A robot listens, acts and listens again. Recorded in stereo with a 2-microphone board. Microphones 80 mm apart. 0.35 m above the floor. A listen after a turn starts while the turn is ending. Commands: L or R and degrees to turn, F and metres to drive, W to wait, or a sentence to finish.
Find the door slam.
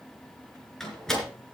L30
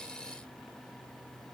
W
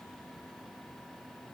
I heard a door slam, but can't make it out now. It was about 25° right or 145° left.